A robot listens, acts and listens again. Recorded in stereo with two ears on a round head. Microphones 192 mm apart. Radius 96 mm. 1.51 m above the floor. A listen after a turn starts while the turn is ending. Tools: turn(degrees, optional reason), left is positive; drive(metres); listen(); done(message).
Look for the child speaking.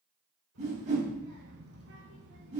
turn(degrees=-90)
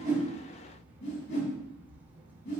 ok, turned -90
turn(degrees=-10, reason="So it is at 10° right.")
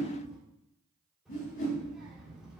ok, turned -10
done("Facing the child speaking.")